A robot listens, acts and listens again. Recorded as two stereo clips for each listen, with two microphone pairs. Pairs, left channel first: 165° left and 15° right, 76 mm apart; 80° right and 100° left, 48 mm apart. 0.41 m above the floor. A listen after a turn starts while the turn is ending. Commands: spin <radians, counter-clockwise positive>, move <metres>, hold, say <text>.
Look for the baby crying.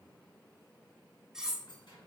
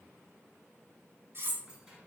hold
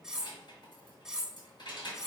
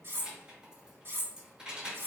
hold
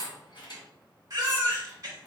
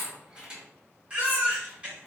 spin 0.52
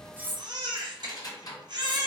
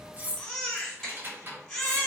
say Facing the baby crying, 1 to 2 m away.